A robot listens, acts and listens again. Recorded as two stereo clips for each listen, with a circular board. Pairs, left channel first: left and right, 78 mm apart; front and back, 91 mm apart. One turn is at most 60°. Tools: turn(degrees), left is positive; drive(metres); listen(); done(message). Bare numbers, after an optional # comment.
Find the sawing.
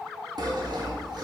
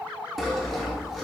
# The sawing: 90° right.
turn(-60)
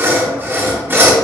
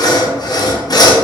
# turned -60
# The sawing is now 30° right.
turn(-30)
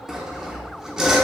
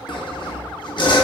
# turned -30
done("Facing the sawing.")